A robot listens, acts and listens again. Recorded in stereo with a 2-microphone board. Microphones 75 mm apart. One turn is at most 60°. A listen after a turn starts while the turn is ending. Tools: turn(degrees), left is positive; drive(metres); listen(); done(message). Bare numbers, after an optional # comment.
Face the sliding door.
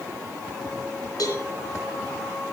listen()
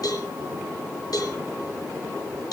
listen()
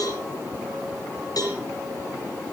done("I can't make out a sliding door to turn to.")